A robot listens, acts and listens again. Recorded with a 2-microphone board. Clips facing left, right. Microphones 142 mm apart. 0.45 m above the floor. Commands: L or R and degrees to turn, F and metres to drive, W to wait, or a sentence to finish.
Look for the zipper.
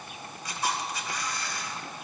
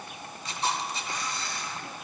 W
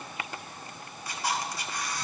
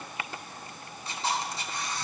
W
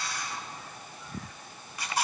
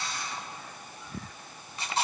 I can't make out a zipper, only a camera shutter.